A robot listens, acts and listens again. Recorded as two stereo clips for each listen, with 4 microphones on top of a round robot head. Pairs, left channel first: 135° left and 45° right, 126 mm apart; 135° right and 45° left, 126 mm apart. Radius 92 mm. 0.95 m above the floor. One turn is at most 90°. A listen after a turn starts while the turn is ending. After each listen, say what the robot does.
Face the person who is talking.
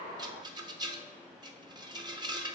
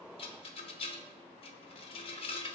Keep listening.
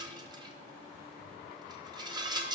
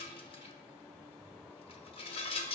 Keep listening.
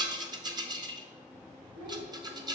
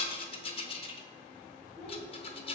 Turn 35° right.
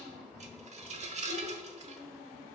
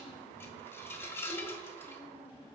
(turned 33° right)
Found it: a child speaking, straight ahead, 2 to 4 m away.